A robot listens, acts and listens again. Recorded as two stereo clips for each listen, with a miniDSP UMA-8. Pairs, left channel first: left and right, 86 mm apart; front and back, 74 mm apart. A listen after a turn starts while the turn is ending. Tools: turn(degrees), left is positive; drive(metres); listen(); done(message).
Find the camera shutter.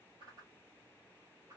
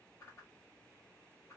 listen()
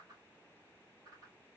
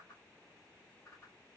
listen()
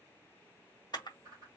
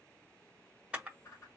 turn(degrees=110)
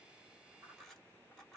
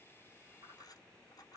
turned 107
listen()
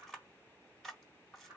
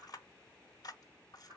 done("Found it: a camera shutter, straight ahead.")